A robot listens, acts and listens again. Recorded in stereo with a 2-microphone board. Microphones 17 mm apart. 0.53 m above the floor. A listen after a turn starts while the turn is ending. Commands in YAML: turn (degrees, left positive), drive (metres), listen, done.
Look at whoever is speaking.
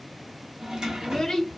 turn: 35
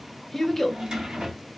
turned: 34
turn: 10
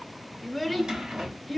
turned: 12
done: "Found it: a child speaking, straight ahead, under 1 m away."